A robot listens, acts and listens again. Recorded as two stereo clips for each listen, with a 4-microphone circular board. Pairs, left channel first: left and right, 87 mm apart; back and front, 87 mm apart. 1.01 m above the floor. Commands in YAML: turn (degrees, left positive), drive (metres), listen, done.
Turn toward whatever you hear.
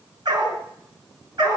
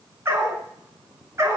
turn: -55
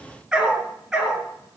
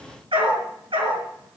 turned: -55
done: "Facing the dog barking."